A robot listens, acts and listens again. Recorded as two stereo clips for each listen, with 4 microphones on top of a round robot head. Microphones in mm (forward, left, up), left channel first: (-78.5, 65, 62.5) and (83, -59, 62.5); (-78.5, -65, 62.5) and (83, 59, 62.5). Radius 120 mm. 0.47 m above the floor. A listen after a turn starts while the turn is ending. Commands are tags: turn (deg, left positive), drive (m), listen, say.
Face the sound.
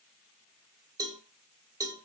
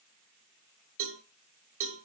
<turn deg="35"/>
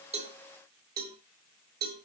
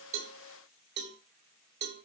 <say>Found it: a cowbell, straight ahead.</say>